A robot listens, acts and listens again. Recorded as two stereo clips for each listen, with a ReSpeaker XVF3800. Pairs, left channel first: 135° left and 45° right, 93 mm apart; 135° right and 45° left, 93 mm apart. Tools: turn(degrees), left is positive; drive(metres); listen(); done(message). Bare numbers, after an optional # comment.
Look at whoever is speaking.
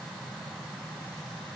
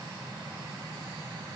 listen()
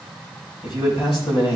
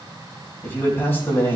# The man speaking: 160° left.
turn(160)
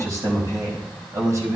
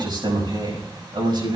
# The man speaking is now 10° left.
turn(10)
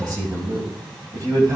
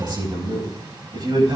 done("Facing the man speaking.")